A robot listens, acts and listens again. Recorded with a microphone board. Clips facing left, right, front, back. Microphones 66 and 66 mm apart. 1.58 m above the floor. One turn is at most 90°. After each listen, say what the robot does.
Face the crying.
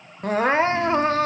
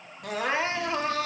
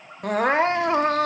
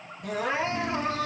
Turn 35° left.
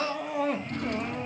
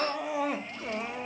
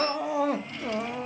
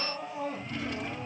Facing the crying, 1 to 2 m away.